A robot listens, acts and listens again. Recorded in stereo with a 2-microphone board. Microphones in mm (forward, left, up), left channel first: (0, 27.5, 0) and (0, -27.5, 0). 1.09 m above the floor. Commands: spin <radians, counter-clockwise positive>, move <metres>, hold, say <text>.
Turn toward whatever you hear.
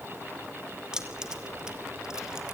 spin -0.52
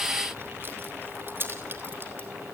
spin -2.44
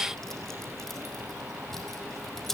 say Facing the keys jangling.